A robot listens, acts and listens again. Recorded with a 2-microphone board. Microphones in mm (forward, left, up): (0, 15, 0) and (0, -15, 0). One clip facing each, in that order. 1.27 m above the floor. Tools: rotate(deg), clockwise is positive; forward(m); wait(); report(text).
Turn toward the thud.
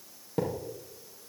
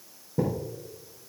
rotate(-65)
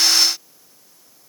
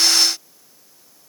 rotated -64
wait()
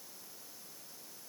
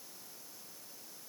report("I heard a thud, but can't make it out now. It was about straight ahead or 55° left.")